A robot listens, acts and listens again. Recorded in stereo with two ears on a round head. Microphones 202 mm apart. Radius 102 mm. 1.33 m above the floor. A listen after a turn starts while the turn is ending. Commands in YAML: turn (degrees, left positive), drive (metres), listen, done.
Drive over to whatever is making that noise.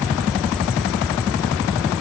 listen: true
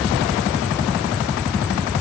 listen: true
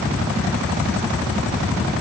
done: "I can't make out anything to turn to."